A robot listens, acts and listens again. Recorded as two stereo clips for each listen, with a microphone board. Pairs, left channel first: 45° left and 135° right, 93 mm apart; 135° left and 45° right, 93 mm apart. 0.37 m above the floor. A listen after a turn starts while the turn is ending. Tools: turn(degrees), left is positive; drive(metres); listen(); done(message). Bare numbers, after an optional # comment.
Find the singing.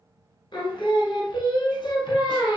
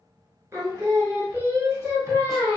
# The singing: 15° left.
turn(15)
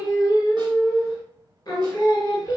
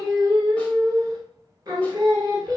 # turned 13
done("Facing the singing, under 1 m away.")